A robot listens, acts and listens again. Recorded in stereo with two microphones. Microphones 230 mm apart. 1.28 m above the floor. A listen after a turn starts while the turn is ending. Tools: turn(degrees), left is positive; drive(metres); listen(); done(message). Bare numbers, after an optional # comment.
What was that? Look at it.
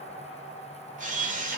# The camera shutter: about 35° right or 145° right.
turn(-35)
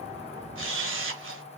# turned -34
# So it is at 105° right.
turn(-105)
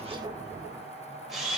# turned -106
done("Facing the camera shutter, under 1 m away.")